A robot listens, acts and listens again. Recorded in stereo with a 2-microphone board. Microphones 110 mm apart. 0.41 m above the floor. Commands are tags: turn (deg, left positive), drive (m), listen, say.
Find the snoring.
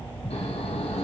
<turn deg="70"/>
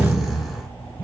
<say>Found it: snoring, straight ahead, 2 to 4 m away.</say>